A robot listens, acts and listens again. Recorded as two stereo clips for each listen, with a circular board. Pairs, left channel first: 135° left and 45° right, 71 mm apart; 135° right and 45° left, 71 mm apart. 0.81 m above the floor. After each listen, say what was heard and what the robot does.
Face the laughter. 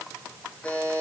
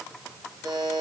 Keep listening.
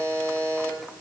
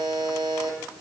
Keep listening.
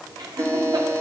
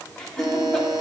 The laughter: 55° right. Turn 55° right.
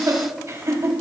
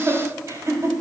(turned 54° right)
Found it: laughter, straight ahead.